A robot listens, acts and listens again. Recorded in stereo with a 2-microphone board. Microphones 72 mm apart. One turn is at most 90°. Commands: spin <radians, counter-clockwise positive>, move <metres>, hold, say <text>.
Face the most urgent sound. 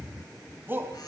spin -0.52
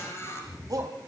spin -1.57
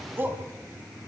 spin -0.52
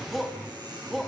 say Found it: a shout, straight ahead.